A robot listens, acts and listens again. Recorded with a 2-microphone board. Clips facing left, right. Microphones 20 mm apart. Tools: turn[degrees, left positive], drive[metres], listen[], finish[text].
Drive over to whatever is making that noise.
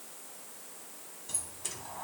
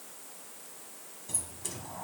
Action: turn[30]
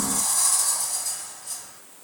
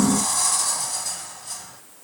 Thought: So it is at 15° right.
Action: turn[-15]
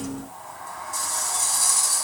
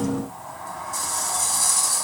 Action: drive[1.0]
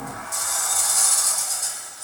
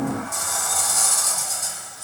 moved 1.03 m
Action: drive[1.0]
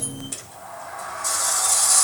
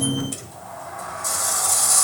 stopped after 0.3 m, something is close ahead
Thought: The sliding door is now 10° left.
Action: turn[10]
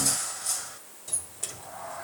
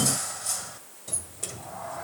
Action: finish[I am next to the sliding door.]